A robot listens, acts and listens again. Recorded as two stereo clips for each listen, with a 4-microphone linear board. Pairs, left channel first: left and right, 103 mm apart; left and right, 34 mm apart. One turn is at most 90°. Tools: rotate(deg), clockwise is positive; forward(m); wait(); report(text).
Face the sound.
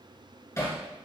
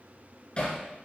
rotate(-30)
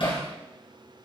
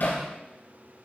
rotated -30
rotate(-90)
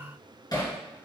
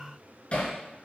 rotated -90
rotate(-40)
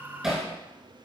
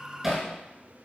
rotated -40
report("Found it: hammering, straight ahead, 2 to 4 m away.")